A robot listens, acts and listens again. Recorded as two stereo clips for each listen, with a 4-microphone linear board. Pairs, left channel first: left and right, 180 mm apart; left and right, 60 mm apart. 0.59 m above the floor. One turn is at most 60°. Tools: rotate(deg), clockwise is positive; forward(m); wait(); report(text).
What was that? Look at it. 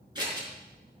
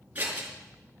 rotate(25)
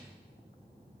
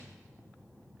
wait()
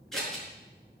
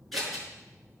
report("Facing the scissors.")